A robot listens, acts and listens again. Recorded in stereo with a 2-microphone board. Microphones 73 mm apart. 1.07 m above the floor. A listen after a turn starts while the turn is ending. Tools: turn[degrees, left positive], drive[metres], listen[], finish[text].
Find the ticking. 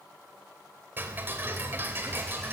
Thought: The ticking: about 25° right or 155° right.
Action: turn[-25]
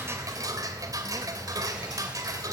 Thought: So it is at 125° right.
Action: turn[-125]
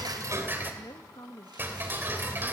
Thought: The ticking is now 30° right.
Action: turn[-30]
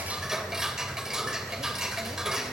Thought: The ticking is now 10° right.
Action: turn[-10]
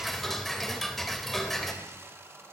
Action: finish[Facing the ticking.]